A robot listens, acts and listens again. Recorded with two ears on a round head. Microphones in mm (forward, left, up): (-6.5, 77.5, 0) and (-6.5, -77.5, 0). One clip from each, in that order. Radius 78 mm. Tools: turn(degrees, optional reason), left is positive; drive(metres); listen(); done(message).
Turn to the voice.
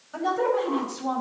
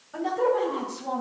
turn(degrees=25, reason="The woman speaking: about 25° left or 155° left.")
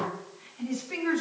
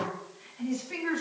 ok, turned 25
done("Facing the woman speaking.")